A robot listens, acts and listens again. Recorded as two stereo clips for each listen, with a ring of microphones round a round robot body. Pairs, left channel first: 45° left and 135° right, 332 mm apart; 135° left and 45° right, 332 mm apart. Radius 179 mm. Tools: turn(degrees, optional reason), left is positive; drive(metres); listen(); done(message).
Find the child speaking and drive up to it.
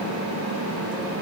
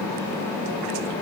listen()
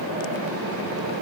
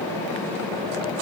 listen()
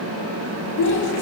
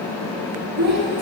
drive(metres=1.0)
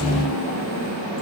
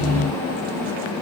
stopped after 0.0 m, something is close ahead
listen()
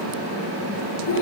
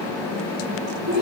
done("Blocked. The child speaking is further on, straight ahead.")